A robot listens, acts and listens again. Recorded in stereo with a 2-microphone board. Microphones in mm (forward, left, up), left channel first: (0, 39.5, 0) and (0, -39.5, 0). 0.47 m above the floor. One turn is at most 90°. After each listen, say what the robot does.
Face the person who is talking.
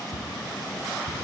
Keep listening.
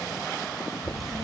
Turn 75° right.
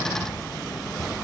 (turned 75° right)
Turn 10° left.
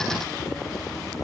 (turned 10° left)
Turn 10° left.
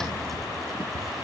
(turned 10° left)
Keep listening.
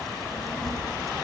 Facing the child speaking.